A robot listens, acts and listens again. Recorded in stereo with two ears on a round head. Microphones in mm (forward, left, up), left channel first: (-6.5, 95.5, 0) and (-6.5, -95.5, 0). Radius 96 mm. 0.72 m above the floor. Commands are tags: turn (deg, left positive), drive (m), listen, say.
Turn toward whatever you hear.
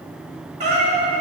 <turn deg="-35"/>
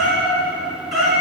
<say>Found it: a cat meowing, straight ahead, over 4 m away.</say>